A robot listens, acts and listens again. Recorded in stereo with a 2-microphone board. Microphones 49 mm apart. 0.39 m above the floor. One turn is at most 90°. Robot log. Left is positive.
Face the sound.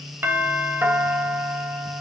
note: The doorbell: about 45° right or 135° right.
cmd yaw -45
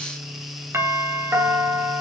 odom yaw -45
note: So it is at 75° right.
cmd yaw -75
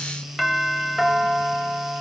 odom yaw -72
end: Found it: a doorbell, straight ahead.